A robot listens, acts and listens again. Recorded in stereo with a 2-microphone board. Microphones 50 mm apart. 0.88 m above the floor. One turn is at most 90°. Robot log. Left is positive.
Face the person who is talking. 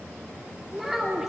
cmd yaw -30
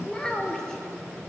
note: So it is at 10° left.
cmd yaw +10
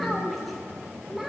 end: Found it: a child speaking, straight ahead, 2 to 4 m away.